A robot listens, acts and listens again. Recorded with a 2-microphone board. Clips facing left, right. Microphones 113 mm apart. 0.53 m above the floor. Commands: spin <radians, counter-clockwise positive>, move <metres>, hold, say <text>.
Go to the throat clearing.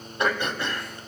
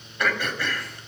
spin 0.44
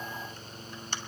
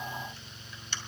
spin 2.27
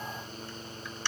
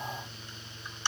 spin -0.35
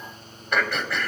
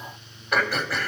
move 1.0
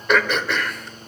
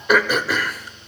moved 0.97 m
spin -0.17
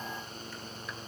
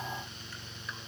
move 1.0
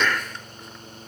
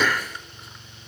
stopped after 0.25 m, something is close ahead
spin -0.17
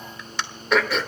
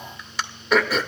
say I am next to the throat clearing.